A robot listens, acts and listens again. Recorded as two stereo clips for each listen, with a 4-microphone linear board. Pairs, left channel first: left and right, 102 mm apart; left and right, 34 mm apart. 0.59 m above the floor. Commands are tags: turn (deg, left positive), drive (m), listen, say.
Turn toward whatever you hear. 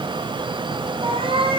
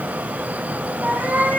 <turn deg="-65"/>
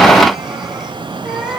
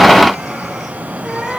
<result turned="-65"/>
<say>Facing the cat meowing.</say>